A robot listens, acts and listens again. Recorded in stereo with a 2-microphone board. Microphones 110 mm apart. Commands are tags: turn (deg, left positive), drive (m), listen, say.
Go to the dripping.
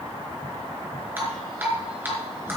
<turn deg="-20"/>
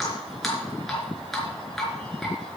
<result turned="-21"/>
<drive m="1.0"/>
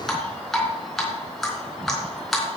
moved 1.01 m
<drive m="1.0"/>
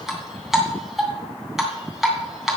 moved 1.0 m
<drive m="1.0"/>
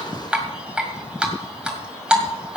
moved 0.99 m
<turn deg="-10"/>
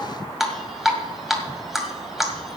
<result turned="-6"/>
<drive m="1.0"/>
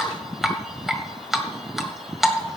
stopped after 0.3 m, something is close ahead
<say>Arrived at the dripping, straight ahead.</say>